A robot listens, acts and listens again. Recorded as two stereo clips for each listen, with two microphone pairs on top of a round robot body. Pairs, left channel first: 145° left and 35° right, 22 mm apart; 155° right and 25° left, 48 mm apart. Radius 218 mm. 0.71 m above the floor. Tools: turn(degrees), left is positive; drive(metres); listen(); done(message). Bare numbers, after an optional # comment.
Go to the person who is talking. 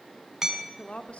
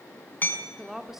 # The woman speaking: 110° left.
turn(110)
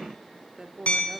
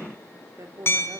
# The woman speaking is now 15° left.
turn(15)
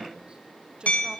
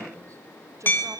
drive(1.0)
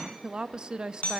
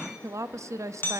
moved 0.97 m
# The woman speaking is now 10° left.
turn(10)
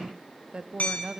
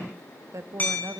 drive(1.0)
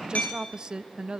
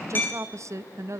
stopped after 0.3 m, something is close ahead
# The woman speaking is now 10° left.
turn(10)
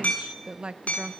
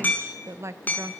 done("Arrived at the woman speaking, straight ahead.")